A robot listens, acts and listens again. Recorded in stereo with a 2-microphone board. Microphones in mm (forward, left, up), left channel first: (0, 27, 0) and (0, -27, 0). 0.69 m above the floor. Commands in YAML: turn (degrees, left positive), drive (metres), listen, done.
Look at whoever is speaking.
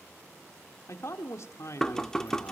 turn: 60
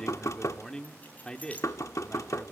turn: 15
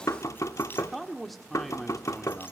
done: "Found it: a man speaking, straight ahead."